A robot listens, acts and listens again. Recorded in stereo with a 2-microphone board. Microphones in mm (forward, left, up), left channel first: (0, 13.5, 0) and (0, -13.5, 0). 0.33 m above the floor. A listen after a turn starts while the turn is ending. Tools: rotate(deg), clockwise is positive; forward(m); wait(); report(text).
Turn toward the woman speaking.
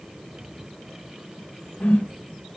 wait()
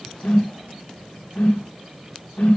wait()
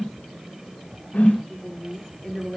rotate(30)
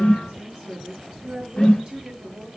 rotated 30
rotate(135)
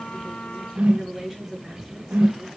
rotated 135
report("Facing the woman speaking, over 4 m away.")